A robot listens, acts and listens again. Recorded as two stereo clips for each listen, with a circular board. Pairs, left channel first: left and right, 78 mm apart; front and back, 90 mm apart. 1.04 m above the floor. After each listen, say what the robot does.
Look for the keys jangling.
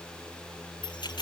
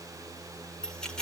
Turn 85° left.
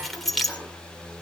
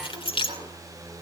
Found it: keys jangling, straight ahead, 2 to 4 m away.